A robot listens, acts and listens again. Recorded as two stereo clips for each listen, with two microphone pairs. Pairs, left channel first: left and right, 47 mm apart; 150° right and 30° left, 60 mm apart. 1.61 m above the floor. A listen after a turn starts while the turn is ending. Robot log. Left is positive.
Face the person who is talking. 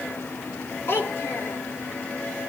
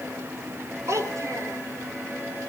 note: The child speaking: 55° left.
cmd yaw +55
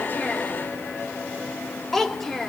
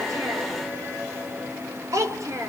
end: Facing the child speaking, 2 to 4 m away.